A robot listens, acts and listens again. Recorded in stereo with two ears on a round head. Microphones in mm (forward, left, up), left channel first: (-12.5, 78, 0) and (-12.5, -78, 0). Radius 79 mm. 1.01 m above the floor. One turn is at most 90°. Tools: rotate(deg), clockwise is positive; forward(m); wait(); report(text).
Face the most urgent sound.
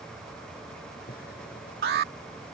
rotate(60)
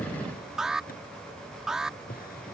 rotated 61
report("Found it: an alarm, straight ahead.")